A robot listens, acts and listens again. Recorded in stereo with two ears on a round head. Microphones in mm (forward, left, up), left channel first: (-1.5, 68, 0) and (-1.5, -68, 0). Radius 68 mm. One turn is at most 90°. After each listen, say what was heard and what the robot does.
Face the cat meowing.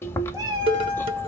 The cat meowing: about 25° right or 155° right. Turn 25° right.
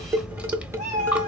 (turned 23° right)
So it is at 130° right. Turn 90° right.
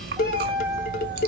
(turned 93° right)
The cat meowing is now 30° right. Turn 30° right.
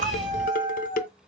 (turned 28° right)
Found it: a cat meowing, straight ahead.